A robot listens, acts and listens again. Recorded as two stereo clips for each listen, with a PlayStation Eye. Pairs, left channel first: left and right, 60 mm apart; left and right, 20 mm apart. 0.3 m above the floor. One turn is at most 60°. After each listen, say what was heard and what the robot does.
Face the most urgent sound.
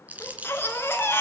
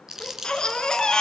The baby crying: about 35° left or 145° left. Turn 35° left.
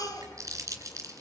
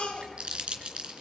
So it is at 105° left. Turn 60° left.
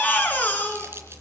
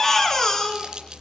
The baby crying is now 25° left. Turn 25° left.
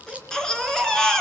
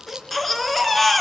The baby crying is now 10° left. Turn 10° left.
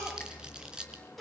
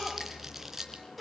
Found it: a baby crying, straight ahead, 2 to 4 m away.